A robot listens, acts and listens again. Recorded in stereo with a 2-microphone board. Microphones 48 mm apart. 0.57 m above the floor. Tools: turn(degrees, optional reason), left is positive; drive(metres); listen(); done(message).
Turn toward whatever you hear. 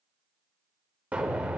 turn(degrees=-25, reason="The explosion: about 25° right or 155° right.")
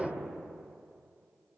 done("Facing the explosion, 1 to 2 m away.")